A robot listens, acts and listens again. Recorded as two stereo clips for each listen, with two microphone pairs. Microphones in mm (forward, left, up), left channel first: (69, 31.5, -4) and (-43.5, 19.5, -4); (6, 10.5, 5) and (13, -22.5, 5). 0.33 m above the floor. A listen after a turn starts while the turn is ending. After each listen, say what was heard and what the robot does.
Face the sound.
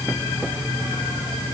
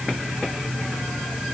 Keep listening.
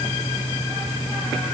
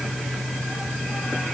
Keep listening.
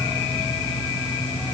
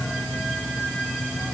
I can't make out anything.